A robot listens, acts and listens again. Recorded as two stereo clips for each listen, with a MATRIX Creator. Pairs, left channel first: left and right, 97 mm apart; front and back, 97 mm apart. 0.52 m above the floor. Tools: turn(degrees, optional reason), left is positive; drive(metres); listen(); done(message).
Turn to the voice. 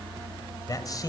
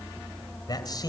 turn(degrees=45, reason="The man speaking: 45° left.")
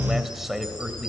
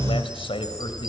done("Found it: a man speaking, straight ahead, 2 to 4 m away.")